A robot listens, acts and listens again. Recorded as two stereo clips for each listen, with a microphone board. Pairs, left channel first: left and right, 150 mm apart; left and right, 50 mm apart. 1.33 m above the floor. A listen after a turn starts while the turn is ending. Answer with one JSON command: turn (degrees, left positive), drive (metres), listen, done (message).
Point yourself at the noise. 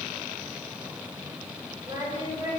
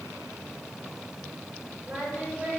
{"turn": -35}
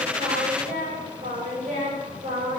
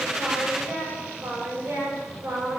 {"turn": -110}
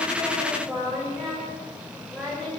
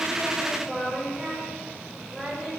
{"done": "Found it: singing, straight ahead, over 4 m away."}